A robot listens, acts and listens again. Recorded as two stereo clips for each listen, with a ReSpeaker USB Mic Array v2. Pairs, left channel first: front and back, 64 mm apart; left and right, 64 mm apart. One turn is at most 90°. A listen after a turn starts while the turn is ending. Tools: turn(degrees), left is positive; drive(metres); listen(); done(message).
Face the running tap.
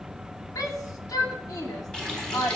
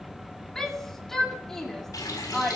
turn(degrees=80)
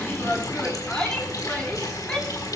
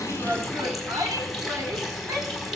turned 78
done("Facing the running tap.")